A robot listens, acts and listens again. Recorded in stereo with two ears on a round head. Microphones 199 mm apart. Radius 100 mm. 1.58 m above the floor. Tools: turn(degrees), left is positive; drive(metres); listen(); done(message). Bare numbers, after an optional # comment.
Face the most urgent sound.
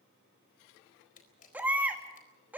turn(-30)
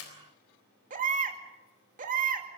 # So it is at 140° right.
turn(-140)
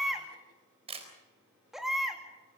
done("Found it: a baby crying, straight ahead, 2 to 4 m away.")